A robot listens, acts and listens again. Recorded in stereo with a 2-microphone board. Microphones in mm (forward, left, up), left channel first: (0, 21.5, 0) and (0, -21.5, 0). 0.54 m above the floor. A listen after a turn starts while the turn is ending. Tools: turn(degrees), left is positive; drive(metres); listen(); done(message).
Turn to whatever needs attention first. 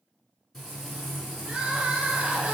turn(degrees=-20)
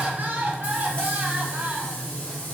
turn(degrees=-140)
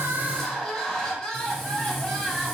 turn(degrees=15)
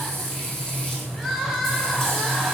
done("Found it: crying, straight ahead.")